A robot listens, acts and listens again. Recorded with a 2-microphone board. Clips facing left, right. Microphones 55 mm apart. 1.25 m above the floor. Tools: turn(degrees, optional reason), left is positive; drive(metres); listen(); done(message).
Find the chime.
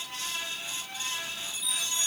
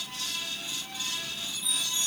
turn(degrees=90)
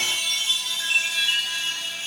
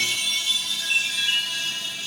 done("Found it: a chime, straight ahead.")